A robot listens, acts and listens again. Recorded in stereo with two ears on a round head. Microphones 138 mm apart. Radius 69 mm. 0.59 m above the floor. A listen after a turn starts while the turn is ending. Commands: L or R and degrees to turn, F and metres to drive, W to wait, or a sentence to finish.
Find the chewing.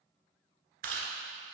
R60
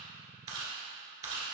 R30
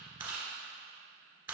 R15
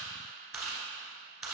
Found it: chewing, straight ahead, 1 to 2 m away.